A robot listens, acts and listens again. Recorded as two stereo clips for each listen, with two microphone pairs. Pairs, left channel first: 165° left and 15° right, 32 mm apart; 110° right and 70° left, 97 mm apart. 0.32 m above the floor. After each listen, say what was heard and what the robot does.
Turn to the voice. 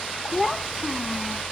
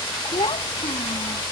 The child speaking: 95° right. Turn 95° right.
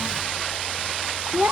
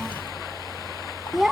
The child speaking is now 10° right. Turn 10° right.
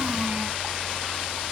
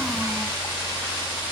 Keep listening.
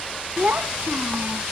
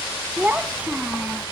Found it: a child speaking, straight ahead.